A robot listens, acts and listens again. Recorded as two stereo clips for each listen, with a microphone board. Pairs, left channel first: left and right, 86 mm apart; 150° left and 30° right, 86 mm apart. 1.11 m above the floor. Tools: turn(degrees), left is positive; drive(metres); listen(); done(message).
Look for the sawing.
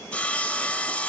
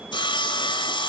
turn(degrees=165)
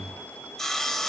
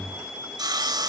done("Found it: sawing, straight ahead, 2 to 4 m away.")